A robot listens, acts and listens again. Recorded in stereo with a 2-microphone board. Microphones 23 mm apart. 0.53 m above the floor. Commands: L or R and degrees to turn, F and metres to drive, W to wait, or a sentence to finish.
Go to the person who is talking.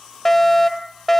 W
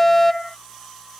W
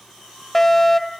I can't make out anyone speaking to turn to.